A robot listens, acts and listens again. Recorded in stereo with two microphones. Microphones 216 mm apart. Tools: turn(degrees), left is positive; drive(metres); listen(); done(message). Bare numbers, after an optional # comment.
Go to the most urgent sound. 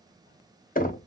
listen()
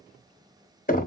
listen()
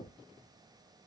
done("I can't make out anything urgent, only knocking.")